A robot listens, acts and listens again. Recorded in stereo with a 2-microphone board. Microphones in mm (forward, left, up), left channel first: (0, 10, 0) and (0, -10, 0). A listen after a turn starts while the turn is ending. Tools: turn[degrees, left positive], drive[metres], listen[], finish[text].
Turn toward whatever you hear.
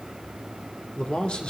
Thought: The man speaking: about 55° left or 125° left.
Action: turn[55]
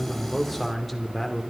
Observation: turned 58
Thought: So it is at 10° left.
Action: turn[10]
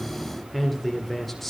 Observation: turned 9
Thought: The man speaking is now 10° left.
Action: turn[10]
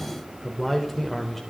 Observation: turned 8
Thought: The man speaking is now 10° left.
Action: turn[10]
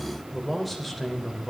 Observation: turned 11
Action: finish[Facing the man speaking, 2 to 4 m away.]